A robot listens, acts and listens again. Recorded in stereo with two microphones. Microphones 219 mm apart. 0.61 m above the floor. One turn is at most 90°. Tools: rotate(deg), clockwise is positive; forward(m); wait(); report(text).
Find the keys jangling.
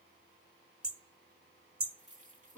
rotate(35)
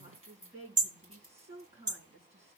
rotate(90)
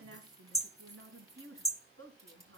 rotate(15)
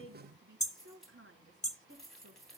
report("Found it: keys jangling, straight ahead.")